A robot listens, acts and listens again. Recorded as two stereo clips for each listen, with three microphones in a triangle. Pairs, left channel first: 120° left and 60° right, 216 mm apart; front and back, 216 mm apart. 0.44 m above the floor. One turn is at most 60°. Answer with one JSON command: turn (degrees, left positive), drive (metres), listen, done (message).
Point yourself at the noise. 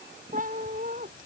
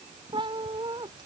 {"turn": -60}
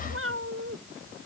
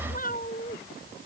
{"turn": -45}
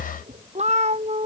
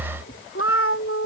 {"done": "Facing the cat meowing."}